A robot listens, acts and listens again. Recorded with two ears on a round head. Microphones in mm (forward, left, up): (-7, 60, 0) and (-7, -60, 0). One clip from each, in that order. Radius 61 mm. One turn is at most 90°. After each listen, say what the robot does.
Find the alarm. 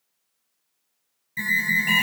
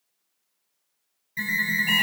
Turn 30° left.
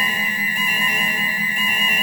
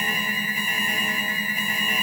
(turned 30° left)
Turn 90° left.
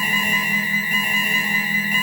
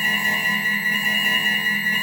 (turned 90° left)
Turn 80° left.
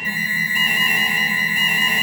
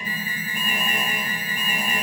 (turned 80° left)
Turn 20° left.
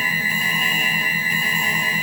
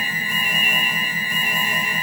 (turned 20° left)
Found it: an alarm, straight ahead.